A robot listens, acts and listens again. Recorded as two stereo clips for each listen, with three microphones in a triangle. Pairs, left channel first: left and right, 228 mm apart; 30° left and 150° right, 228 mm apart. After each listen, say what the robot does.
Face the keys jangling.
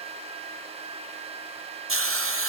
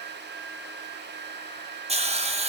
Keep listening.
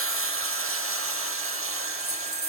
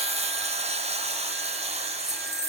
Turn 90° right.
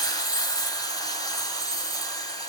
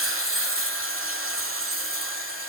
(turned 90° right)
Keep listening.
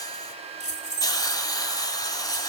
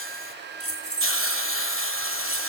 Turn 35° left.
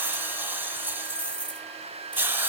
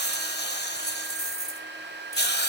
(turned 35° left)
Found it: keys jangling, straight ahead, 2 to 4 m away.